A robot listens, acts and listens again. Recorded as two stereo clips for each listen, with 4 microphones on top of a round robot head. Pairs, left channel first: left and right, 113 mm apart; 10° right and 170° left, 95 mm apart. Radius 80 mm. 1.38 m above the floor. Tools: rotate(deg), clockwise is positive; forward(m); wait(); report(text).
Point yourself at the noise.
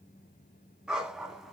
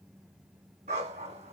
rotate(175)
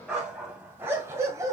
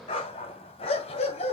rotate(20)
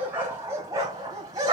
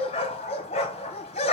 rotate(25)
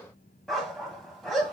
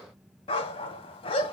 report("Facing the dog barking, 2 to 4 m away.")